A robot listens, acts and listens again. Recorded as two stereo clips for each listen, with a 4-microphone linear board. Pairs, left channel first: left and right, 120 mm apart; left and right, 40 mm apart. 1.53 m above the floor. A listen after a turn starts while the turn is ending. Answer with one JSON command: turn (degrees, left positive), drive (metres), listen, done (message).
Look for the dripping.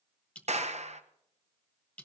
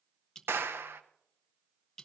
{"turn": 30}
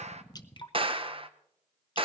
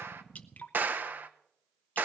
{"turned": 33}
{"turn": 140}
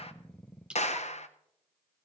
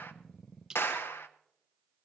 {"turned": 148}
{"turn": -10}
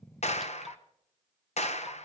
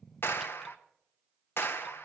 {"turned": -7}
{"listen": true}
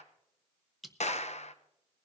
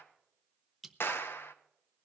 {"done": "Facing the dripping."}